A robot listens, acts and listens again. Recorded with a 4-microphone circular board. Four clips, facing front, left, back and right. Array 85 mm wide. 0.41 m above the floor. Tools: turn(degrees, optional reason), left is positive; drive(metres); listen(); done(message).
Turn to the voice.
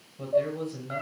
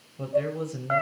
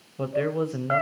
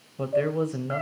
turn(degrees=-145, reason="The man speaking: 145° right.")
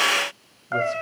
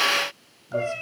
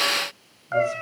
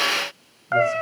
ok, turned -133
turn(degrees=-10, reason="Nothing new. It was at 10° right.")
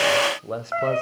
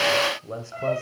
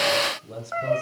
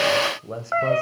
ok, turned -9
done("Facing the man speaking, 1 to 2 m away.")